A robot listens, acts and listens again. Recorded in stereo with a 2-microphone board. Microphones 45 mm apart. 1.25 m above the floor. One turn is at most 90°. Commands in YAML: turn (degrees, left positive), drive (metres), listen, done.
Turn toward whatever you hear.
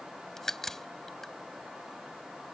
turn: 30
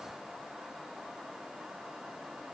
listen: true
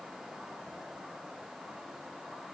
done: "I heard a crack, but can't make it out now. It was about 25° right or 145° left."